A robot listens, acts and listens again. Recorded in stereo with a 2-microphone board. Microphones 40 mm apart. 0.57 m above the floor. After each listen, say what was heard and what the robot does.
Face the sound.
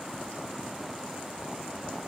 Keep listening.
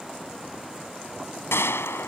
Turn 90° left.
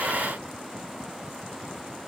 I heard a gunshot from this way, but can't make it out now.